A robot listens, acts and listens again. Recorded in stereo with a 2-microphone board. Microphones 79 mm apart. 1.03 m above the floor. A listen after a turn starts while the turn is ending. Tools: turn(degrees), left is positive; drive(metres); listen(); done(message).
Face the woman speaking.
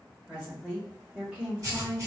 turn(degrees=-25)
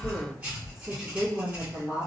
turn(degrees=-30)
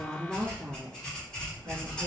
turn(degrees=-30)
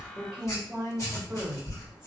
done("Facing the woman speaking, 1 to 2 m away.")